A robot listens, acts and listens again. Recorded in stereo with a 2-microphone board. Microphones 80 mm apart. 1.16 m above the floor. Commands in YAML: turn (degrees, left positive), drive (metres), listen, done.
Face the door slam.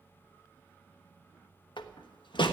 turn: 90
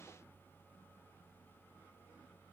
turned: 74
turn: 15
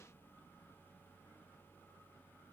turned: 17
done: "I heard a door slam from this way, but can't make it out now."